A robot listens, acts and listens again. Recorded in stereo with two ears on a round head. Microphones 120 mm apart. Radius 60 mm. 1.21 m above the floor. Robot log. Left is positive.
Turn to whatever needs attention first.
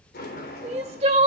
note: The crying: about 50° right or 130° right.
cmd yaw -50
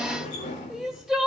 end: Found it: crying, straight ahead, 2 to 4 m away.